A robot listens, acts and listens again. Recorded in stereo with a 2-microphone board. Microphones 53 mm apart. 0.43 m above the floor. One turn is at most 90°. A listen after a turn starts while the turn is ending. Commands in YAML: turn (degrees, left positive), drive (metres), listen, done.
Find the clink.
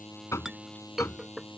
turn: -30
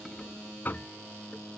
turn: 20
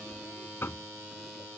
listen: true
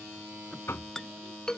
turn: 10
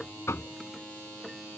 listen: true
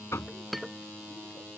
done: "Facing the clink."